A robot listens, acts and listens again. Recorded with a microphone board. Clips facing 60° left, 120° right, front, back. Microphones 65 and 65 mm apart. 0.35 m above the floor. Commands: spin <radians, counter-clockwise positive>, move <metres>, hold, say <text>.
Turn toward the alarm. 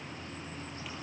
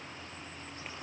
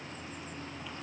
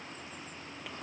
hold
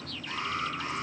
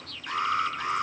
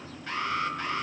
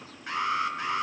spin -1.83
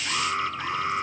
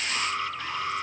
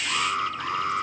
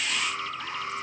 say Found it: an alarm, straight ahead.